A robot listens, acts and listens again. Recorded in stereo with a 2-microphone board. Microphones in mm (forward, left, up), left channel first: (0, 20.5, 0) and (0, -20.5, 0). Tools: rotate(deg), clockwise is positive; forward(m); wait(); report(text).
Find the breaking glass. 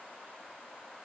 wait()
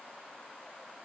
wait()
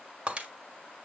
rotate(35)
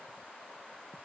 wait()
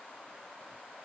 report("I heard breaking glass, but can't make it out now. It was about straight ahead or 110° right.")